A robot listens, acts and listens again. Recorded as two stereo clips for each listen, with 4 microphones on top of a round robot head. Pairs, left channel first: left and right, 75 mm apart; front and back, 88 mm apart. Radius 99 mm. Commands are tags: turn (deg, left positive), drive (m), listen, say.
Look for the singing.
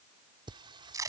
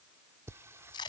<turn deg="-115"/>
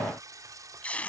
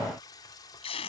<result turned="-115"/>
<turn deg="-50"/>
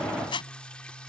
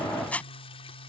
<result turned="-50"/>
<turn deg="10"/>
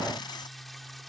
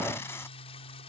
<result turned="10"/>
<say>Facing the singing.</say>